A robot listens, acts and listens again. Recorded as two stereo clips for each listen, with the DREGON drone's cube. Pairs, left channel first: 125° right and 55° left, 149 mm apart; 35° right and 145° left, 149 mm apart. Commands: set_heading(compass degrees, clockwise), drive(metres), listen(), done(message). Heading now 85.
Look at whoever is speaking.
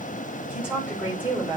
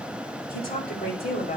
set_heading(110)
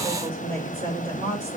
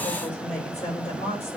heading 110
set_heading(100)
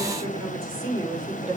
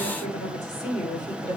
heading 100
done("Found it: a woman speaking, straight ahead, over 4 m away.")